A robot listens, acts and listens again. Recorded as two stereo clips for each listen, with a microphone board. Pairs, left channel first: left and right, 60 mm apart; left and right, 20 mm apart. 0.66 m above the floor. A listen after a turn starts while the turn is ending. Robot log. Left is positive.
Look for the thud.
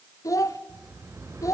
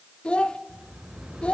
cmd idle
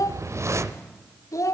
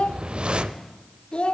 cmd idle
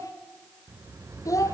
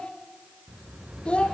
end: I can't make out a thud, only a child speaking and a whoosh.